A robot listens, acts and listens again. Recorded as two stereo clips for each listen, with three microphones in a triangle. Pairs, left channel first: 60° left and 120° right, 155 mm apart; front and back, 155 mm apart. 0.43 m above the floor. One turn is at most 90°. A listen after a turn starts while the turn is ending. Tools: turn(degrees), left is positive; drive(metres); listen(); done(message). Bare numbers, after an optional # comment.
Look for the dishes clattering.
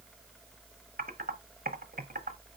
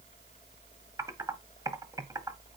listen()
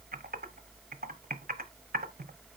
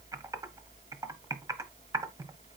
listen()
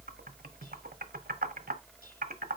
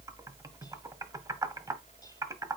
done("I can't make out dishes clattering, only typing on a keyboard.")